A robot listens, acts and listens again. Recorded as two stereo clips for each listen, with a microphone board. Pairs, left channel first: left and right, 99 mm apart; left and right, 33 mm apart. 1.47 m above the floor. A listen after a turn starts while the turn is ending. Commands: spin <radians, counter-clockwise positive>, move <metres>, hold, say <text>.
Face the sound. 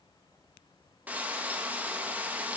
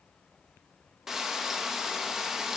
spin -0.52
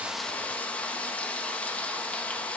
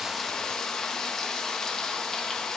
spin 0.26
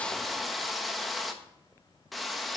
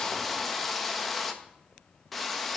say Found it: frying, straight ahead, 1 to 2 m away.